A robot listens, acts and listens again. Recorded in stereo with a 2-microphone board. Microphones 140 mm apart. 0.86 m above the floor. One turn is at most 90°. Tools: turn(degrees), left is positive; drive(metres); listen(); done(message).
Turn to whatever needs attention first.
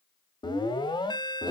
turn(degrees=30)
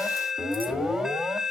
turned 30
done("Facing the alarm, 1 to 2 m away.")